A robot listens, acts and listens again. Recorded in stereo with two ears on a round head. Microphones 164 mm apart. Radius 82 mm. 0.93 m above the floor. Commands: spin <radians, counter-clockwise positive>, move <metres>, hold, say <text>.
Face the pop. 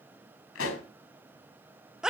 spin 1.57
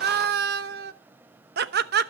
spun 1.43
spin 0.17
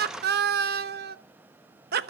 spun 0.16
say Facing where the pop came from. I can't hear it now.